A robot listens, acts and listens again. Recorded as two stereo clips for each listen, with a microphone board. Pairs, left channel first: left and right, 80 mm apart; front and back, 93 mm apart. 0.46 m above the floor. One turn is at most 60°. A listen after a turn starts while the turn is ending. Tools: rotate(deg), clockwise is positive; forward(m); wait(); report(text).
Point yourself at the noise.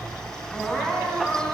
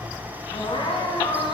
rotate(-10)
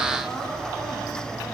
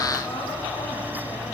report("Found it: crying, straight ahead.")